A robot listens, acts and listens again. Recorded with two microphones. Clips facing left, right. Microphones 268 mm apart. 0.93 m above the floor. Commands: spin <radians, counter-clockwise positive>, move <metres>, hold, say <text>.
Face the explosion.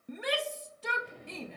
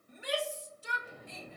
spin -0.52
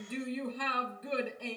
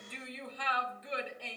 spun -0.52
hold
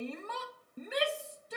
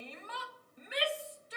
say I heard an explosion, but can't make it out now. It was about 25° left or 145° right.